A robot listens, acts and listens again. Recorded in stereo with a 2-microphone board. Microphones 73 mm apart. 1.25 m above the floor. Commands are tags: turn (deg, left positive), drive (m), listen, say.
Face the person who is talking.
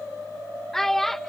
<turn deg="30"/>
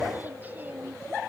<listen/>
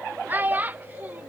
<turn deg="-25"/>
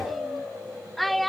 <say>Found it: a child speaking, straight ahead.</say>